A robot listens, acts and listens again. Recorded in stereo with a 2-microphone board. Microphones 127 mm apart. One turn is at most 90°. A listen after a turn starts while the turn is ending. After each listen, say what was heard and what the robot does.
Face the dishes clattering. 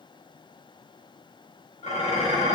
The dishes clattering: about 55° left or 125° left. Turn 55° left.
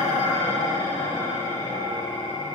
So it is at 45° left. Turn 45° left.
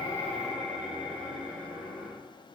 Facing the dishes clattering.